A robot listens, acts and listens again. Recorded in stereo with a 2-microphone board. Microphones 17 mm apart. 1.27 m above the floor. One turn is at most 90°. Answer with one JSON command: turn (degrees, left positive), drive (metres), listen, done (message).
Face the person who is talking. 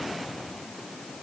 {"listen": true}
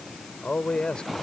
{"turn": 60}
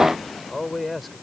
{"done": "Facing the man speaking."}